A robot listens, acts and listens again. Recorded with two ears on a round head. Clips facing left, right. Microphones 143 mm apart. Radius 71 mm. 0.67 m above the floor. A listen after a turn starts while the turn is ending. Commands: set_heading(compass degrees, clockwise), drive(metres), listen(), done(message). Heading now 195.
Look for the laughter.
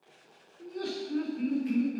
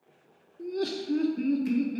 set_heading(240)
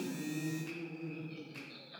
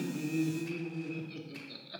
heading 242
set_heading(322)
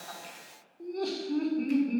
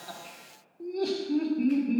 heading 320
done("Facing the laughter.")